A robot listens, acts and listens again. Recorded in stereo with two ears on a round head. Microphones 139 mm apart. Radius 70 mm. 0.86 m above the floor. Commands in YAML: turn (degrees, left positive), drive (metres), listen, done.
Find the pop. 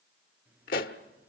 turn: 60
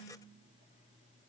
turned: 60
listen: true
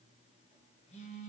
done: "I heard a pop, but can't make it out now. It was about straight ahead or 60° left."